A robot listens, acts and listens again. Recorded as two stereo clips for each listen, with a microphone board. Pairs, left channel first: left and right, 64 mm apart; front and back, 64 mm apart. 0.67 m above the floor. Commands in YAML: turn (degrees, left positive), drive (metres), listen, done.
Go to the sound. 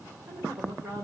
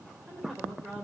turn: -95
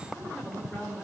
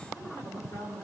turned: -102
turn: 10
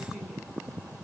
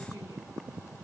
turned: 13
drive: 1.0
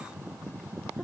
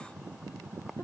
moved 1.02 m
listen: true
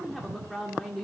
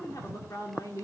drive: 1.0
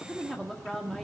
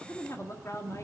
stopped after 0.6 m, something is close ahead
done: "Arrived at the woman speaking, straight ahead."